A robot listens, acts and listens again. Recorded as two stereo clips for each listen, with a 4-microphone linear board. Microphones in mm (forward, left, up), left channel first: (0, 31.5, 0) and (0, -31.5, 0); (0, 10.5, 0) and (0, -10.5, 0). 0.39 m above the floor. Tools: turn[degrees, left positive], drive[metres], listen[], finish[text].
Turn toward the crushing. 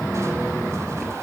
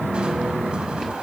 Action: listen[]
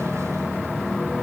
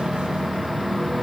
Action: listen[]
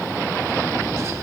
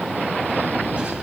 Action: finish[I can't make out crushing.]